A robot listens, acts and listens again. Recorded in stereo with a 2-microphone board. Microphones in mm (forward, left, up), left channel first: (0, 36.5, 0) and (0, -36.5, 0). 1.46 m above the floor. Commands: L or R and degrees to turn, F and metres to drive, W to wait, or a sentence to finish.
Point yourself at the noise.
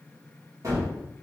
R50
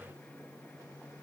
W
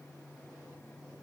I heard a gunshot, but can't make it out now. It was about straight ahead or 80° right.